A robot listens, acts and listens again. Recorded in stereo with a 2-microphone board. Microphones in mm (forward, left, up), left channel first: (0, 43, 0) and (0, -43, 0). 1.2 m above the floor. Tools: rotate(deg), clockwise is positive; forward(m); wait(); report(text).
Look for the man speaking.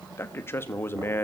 rotate(-25)
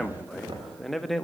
report("Facing the man speaking.")